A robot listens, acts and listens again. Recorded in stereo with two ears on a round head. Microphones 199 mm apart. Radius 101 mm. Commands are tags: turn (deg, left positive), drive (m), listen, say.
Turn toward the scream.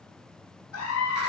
<turn deg="75"/>
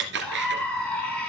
<say>Found it: a scream, straight ahead, over 4 m away.</say>